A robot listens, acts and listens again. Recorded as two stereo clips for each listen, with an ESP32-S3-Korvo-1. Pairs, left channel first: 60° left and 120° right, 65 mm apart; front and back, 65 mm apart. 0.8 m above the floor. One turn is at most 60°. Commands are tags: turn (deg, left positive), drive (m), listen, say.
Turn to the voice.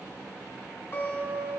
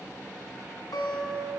<listen/>
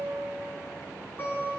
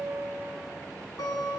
<listen/>
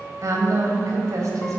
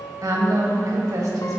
<turn deg="-60"/>
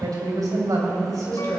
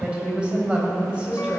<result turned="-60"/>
<turn deg="-60"/>
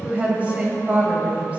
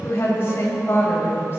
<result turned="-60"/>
<turn deg="-55"/>
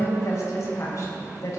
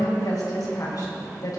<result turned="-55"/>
<turn deg="20"/>
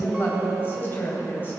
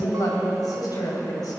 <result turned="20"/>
<say>Facing the woman speaking.</say>